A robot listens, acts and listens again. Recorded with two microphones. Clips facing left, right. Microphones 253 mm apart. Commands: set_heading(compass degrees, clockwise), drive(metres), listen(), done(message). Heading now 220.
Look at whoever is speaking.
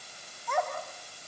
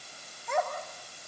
set_heading(245)
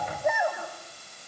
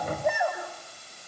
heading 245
done("Found it: a child speaking, straight ahead, over 4 m away.")